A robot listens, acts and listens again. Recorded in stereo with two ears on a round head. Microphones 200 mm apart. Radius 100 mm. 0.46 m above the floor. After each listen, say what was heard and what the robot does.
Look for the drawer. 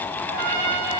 Keep listening.
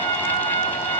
Keep listening.
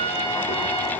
I can't make out a drawer, only a trumpet.